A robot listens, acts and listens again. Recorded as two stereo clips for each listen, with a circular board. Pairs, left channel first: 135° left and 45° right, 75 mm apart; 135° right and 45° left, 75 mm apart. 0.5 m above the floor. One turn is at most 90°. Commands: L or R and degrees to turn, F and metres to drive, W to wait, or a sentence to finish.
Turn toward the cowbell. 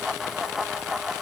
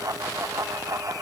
W
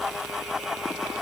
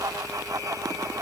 W
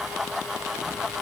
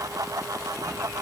I can't make out a cowbell to turn to.